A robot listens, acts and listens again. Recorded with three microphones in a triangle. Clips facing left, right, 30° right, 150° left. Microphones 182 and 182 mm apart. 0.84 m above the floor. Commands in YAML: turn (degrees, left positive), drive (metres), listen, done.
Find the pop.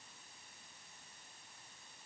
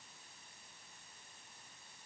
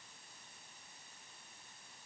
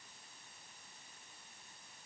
listen: true
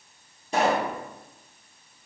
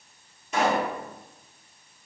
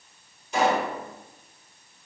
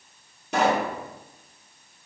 turn: 145
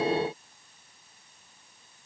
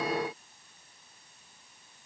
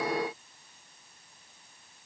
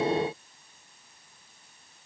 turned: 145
done: "Facing where the pop came from. I can't hear it now."